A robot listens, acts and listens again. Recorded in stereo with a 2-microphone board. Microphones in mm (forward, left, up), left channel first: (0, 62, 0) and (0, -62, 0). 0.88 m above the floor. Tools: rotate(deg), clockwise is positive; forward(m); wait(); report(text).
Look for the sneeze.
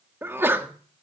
rotate(15)
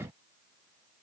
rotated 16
wait()
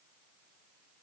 report("I heard a sneeze, but can't make it out now. It was about straight ahead or 145° right.")